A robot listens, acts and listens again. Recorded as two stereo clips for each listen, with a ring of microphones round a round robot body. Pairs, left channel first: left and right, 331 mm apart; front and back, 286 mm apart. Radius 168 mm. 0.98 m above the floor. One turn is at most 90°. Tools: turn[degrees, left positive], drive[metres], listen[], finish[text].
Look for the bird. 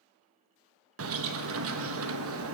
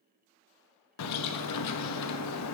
Thought: The bird: 40° right.
Action: turn[-40]
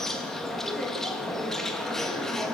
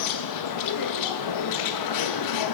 Action: finish[Found it: a bird, straight ahead.]